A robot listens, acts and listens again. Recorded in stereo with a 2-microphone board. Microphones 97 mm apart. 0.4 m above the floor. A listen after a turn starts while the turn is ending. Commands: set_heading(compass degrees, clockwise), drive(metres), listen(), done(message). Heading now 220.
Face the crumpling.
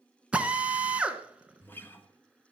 listen()
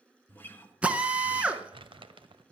set_heading(280)
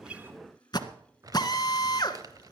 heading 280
set_heading(325)
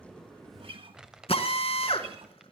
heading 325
set_heading(335)
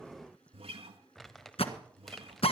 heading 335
done("Facing the crumpling, 1 to 2 m away.")